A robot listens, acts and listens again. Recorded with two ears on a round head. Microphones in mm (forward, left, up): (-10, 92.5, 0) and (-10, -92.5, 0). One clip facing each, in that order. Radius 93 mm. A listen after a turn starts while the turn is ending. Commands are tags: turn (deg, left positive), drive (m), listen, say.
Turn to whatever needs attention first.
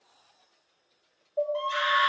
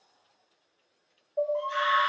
<turn deg="45"/>
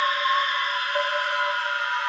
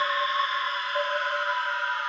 <turn deg="85"/>
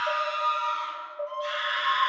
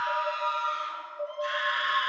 <turn deg="-10"/>
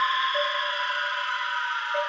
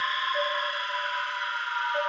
<say>Found it: a scream, straight ahead.</say>